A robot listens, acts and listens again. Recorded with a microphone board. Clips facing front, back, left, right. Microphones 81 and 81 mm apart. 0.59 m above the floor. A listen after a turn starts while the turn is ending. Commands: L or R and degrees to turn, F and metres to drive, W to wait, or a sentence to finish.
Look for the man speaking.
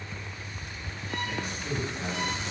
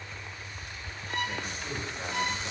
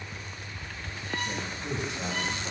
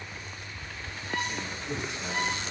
L105
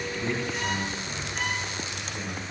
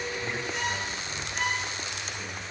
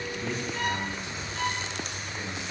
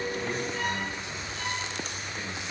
W
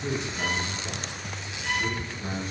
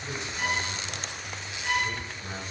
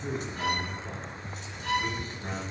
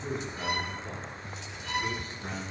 Found it: a man speaking, straight ahead.